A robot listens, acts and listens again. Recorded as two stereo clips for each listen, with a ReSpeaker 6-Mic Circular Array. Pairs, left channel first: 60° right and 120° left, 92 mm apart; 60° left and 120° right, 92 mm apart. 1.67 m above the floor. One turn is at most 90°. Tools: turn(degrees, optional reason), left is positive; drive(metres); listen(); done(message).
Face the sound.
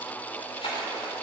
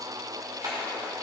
turn(degrees=-70, reason="The splash: 70° right.")
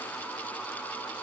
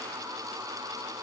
done("Facing where the splash came from. I can't hear it now.")